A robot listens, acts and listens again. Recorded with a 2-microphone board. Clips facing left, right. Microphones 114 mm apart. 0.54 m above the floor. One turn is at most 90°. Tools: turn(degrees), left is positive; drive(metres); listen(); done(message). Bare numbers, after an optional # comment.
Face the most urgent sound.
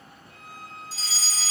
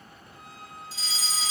# The fire alarm: about 40° left or 140° left.
turn(40)
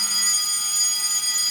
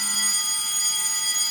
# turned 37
# So it is at 100° left.
turn(90)
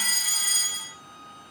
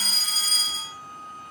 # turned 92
# The fire alarm is now 10° left.
turn(10)
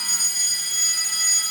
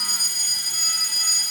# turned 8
done("Facing the fire alarm.")